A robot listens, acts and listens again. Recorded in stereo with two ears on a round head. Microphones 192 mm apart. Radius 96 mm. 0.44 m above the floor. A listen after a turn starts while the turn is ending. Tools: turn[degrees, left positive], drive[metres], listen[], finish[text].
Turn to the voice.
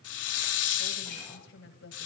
Thought: The woman speaking: about 60° left or 120° left.
Action: turn[60]
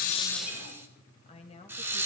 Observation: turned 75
Thought: So it is at 30° left.
Action: turn[30]
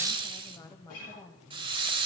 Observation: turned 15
Thought: The woman speaking is now 20° left.
Action: turn[20]
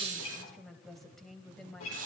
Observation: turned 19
Action: finish[Found it: a woman speaking, straight ahead.]